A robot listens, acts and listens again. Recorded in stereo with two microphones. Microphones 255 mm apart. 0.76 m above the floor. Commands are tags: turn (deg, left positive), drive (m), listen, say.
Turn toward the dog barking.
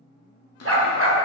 <turn deg="-60"/>
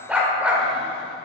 <say>Found it: a dog barking, straight ahead, under 1 m away.</say>